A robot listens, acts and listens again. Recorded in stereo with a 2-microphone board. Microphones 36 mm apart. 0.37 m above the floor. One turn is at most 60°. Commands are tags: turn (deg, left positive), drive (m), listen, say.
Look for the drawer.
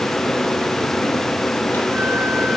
<listen/>
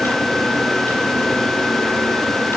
<listen/>
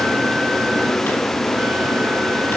<say>I can't make out a drawer.</say>